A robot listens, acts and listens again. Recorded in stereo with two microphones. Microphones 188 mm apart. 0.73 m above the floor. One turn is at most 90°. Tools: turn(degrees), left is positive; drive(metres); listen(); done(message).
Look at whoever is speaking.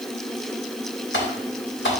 listen()
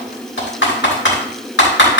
listen()
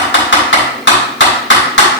done("I can't make out anyone speaking, only typing on a keyboard.")